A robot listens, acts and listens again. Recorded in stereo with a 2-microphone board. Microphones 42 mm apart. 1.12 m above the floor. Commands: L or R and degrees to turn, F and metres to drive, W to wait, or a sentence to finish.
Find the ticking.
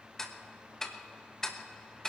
L30
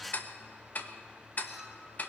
L140
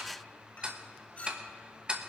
R20
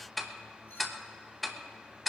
Found it: ticking, straight ahead.